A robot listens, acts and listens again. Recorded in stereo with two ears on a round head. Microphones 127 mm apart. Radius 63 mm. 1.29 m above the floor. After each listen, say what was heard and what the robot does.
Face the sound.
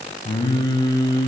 The singing: about 30° left or 150° left. Turn 30° left.
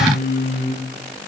So it is at 115° left. Turn 115° left.
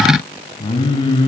The singing is now 35° left. Turn 35° left.
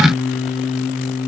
Found it: singing, straight ahead.